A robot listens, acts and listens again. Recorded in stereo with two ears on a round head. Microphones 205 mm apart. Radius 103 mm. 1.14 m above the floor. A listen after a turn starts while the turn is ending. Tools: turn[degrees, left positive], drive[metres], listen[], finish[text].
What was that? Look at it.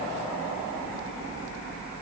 Action: listen[]
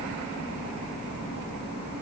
Action: listen[]
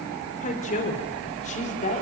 Thought: The woman speaking: about 35° left or 145° left.
Action: turn[35]
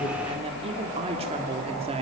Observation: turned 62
Thought: So it is at 30° right.
Action: turn[-30]
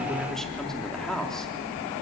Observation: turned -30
Action: finish[Found it: a woman speaking, straight ahead, 2 to 4 m away.]